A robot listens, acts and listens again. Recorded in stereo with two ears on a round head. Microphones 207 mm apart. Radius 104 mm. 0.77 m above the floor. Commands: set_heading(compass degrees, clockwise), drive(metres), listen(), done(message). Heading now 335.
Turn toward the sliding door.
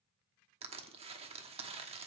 listen()
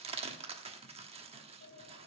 set_heading(275)
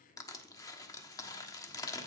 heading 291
listen()
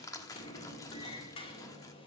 set_heading(266)
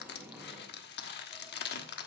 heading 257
set_heading(267)
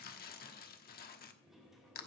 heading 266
done("Found it: a sliding door, straight ahead, 2 to 4 m away.")